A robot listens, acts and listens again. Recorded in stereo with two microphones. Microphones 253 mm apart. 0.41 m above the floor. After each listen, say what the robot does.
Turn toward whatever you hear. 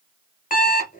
Turn 30° left.
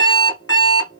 Turn 115° left.
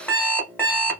Found it: an alarm clock, straight ahead, 1 to 2 m away.